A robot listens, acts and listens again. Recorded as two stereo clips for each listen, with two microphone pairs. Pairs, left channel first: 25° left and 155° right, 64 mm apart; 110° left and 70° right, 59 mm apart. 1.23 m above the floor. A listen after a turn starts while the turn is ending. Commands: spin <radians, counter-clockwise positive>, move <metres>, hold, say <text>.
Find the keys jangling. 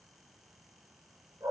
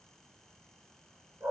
hold
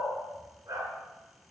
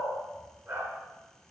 hold
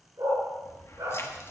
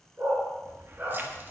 spin -0.35
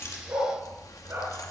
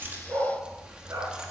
say Facing the keys jangling, 1 to 2 m away.